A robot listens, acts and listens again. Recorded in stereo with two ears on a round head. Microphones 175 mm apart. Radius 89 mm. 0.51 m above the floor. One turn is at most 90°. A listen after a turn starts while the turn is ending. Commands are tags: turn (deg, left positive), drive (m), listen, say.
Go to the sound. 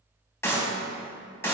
<turn deg="30"/>
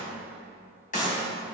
<turn deg="90"/>
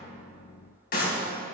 <turn deg="45"/>
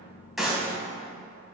<drive m="1.0"/>
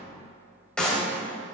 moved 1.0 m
<drive m="1.0"/>
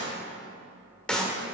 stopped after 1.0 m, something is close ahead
<say>I am next to the clap.</say>